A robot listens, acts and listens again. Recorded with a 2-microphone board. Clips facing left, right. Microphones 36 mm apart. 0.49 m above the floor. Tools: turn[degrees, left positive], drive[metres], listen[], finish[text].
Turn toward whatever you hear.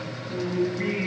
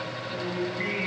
Action: turn[-30]
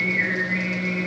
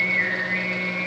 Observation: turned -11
Action: turn[-30]
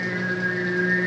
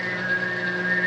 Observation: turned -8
Action: turn[-30]
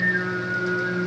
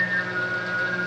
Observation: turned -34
Thought: So it is at 15° left.
Action: turn[15]
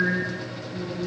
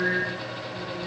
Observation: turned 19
Action: finish[Facing the singing, over 4 m away.]